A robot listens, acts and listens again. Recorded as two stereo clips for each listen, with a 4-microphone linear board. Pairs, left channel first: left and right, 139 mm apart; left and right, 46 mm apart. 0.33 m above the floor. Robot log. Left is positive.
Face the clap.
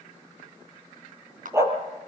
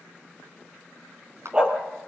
note: The clap: about 70° right or 110° right.
cmd yaw -70
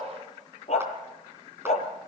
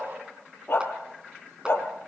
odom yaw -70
cmd idle
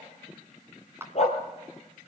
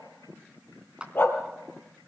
note: So it is at 20° right.
cmd yaw -20
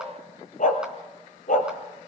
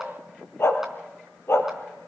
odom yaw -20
cmd idle
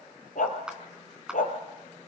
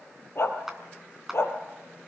end: Found it: a clap, straight ahead.